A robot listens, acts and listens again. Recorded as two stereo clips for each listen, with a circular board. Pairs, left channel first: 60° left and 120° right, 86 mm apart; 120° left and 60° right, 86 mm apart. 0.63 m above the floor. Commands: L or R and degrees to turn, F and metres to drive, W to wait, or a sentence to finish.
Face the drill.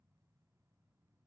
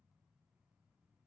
W
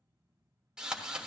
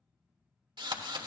R40
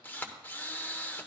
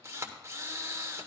Facing the drill.